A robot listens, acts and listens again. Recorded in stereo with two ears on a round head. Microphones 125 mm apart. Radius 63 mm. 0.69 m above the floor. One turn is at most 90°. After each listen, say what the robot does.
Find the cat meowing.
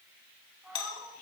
Turn 30° right.
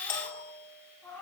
Turn 10° left.
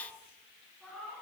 Found it: a cat meowing, straight ahead.